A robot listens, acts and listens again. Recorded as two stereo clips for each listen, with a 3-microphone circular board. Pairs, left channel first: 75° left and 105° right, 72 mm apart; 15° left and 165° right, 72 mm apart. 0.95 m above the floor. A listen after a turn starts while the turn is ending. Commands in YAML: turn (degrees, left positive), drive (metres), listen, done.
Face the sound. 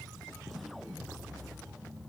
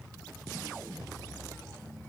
listen: true
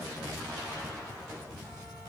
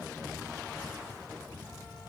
listen: true
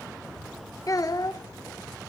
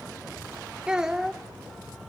turn: 105
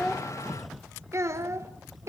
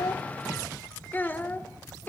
turn: -50
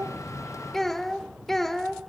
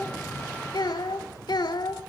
turn: -10
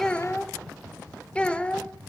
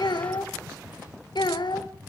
done: "Facing the child speaking, 1 to 2 m away."